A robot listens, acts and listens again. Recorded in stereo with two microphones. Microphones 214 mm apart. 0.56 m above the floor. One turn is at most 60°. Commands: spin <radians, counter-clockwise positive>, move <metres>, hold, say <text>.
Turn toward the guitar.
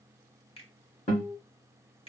spin 0.61
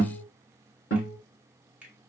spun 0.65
spin 1.05
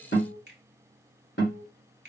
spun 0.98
spin 0.96
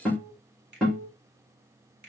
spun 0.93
say Found it: a guitar, straight ahead.